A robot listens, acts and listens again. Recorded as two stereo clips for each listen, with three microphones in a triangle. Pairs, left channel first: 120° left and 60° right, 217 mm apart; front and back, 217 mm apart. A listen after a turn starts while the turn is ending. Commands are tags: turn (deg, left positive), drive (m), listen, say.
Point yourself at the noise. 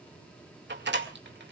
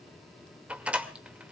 <turn deg="-95"/>
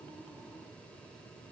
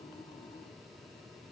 <say>Facing where the door slam came from. I can't hear it now.</say>